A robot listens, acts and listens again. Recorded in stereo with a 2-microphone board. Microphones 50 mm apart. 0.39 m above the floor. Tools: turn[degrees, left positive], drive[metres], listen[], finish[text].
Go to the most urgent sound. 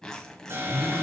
Thought: The alarm: about 60° right or 120° right.
Action: turn[-60]
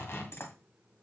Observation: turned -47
Action: listen[]
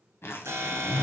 Thought: So it is at 70° right.
Action: turn[-70]
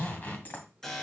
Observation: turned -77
Thought: The alarm is now 10° left.
Action: turn[10]
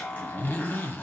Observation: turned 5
Action: drive[1.0]
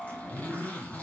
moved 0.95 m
Action: drive[1.0]
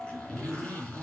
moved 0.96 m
Action: drive[1.0]
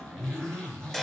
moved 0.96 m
Thought: The alarm is now 10° left.
Action: turn[10]
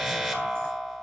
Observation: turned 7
Action: drive[1.0]
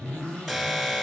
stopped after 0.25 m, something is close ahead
Action: finish[Arrived at the alarm, straight ahead.]